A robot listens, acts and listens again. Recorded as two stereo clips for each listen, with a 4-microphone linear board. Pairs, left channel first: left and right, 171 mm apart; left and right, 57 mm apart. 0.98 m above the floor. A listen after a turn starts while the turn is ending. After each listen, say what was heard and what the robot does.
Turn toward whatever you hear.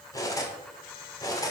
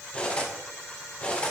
The cutlery clinking: about 20° left or 160° left. Turn 20° left.
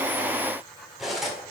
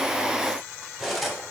Found it: cutlery clinking, straight ahead.